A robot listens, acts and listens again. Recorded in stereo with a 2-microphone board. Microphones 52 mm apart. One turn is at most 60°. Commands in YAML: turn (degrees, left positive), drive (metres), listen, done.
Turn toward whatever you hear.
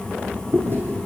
turn: -45
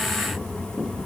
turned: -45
listen: true
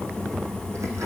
listen: true
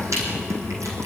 done: "I heard chewing, but can't make it out now. It was about straight ahead or 90° right."